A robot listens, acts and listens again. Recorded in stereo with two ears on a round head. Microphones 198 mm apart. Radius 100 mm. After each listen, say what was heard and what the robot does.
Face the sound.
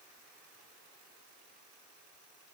Keep listening.
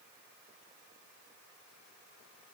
Keep listening.
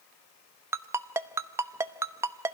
Turn 30° right.
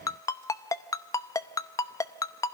So it is at 15° left. Turn 15° left.
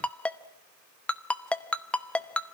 Found it: a ringtone, straight ahead.